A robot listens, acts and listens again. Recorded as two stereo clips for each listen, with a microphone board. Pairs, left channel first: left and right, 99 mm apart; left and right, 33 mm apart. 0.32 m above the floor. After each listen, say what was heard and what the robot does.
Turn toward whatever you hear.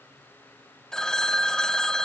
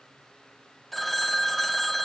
Turn 30° left.
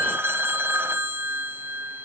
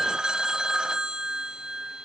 So it is at 25° right. Turn 25° right.
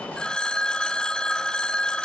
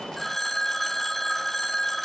The phone ringing is now 10° left. Turn 10° left.
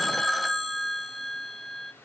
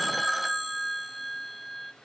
Facing the phone ringing.